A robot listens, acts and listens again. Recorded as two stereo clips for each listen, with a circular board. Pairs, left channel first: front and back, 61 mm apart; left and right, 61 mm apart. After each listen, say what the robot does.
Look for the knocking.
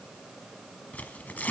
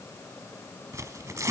Keep listening.
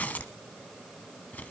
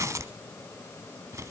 Keep listening.
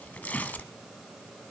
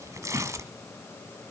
I can't make out knocking, only tearing paper.